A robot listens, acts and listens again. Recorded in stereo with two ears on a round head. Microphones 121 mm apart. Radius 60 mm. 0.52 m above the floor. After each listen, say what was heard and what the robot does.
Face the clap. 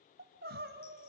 Keep listening.
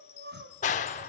The clap: about 60° left or 120° left. Turn 60° left.
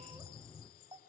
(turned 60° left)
So it is at 30° left. Turn 30° left.
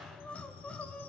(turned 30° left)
Facing the clap.